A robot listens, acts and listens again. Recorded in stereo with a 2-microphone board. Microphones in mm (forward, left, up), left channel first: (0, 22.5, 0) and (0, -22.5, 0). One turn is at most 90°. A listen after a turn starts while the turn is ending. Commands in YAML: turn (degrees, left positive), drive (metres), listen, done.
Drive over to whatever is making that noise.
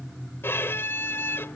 turn: 65
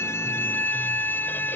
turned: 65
turn: 50
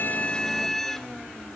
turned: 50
drive: 1.0
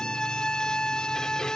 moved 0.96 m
turn: 15
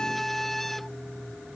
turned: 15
drive: 1.0
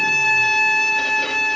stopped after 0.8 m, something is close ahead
done: "Arrived at the violin, straight ahead."